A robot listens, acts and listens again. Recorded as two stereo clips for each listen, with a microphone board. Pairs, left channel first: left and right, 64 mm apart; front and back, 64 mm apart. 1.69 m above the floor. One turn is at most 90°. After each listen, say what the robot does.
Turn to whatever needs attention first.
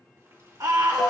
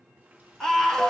Turn 80° right.
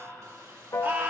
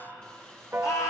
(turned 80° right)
Turn 30° right.
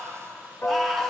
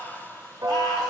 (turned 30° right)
Found it: a scream, straight ahead.